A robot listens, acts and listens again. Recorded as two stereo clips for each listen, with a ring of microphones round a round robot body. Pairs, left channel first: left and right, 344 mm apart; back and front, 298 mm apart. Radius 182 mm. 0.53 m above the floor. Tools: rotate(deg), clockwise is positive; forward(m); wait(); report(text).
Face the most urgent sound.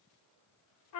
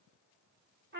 wait()
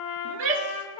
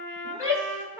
rotate(80)
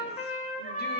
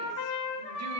wait()
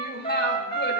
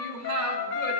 rotate(-30)
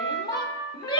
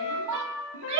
rotate(-10)
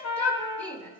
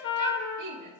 report("Found it: a shout, straight ahead.")